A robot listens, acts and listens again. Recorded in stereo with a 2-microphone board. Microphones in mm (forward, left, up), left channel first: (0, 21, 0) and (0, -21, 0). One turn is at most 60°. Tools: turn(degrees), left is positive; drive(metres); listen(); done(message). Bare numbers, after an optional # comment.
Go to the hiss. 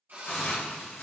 # The hiss: about 75° left or 105° left.
turn(60)
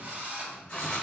# So it is at 25° left.
turn(25)
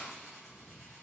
listen()
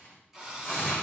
drive(1.0)
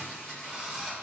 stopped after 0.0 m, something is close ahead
# The hiss is now 10° right.
turn(-10)
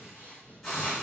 done("Something is in my way. I am facing the hiss but have not reached it.")